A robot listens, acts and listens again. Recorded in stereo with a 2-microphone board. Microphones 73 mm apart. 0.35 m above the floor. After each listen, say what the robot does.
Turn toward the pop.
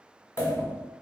Turn 35° left.
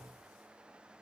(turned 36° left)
Keep listening.
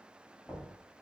I heard a pop, but can't make it out now. It was about straight ahead or 105° left.